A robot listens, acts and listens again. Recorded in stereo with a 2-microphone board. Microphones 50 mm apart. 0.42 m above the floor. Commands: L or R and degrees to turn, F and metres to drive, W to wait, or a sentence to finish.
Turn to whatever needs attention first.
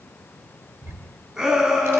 R30
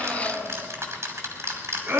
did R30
R135
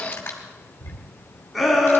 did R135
Facing the shout.